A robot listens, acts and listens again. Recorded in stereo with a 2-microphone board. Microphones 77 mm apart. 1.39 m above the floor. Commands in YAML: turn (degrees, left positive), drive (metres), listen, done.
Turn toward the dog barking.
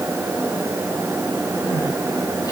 listen: true
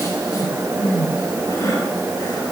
listen: true
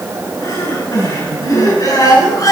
done: "I can't make out a dog barking to turn to."